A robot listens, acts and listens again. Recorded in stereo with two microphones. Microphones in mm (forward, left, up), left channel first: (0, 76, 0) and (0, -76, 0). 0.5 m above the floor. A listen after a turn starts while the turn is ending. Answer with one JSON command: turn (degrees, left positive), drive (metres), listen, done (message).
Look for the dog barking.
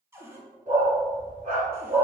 {"turn": -65}
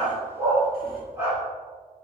{"turn": -15}
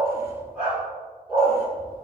{"turn": -10}
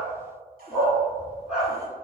{"done": "Facing the dog barking."}